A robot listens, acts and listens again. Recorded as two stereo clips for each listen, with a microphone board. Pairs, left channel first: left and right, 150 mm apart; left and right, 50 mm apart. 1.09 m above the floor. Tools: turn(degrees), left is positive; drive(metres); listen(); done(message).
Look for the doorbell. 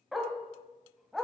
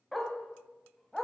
listen()
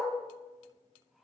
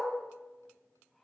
listen()
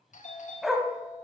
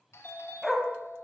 turn(degrees=55)
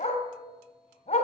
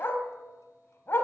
listen()
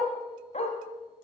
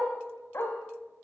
listen()
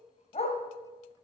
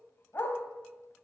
done("I heard a doorbell, but can't make it out now. It was about straight ahead or 70° left.")